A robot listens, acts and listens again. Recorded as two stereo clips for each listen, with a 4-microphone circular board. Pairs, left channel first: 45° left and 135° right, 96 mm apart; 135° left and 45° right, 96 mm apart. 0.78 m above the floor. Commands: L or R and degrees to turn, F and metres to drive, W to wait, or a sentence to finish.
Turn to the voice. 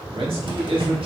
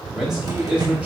R120
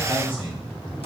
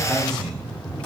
L55
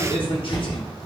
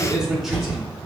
L45
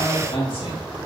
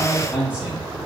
L30
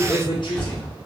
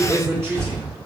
L20
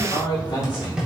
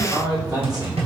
Found it: a man speaking, straight ahead, 1 to 2 m away.